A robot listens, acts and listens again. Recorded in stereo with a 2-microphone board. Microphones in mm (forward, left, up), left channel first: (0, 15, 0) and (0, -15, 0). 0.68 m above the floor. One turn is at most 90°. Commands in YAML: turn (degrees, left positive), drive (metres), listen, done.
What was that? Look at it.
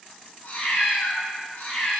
turn: 90
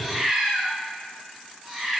turn: -10
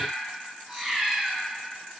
turn: -10
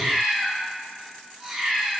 done: "Found it: a cat meowing, straight ahead."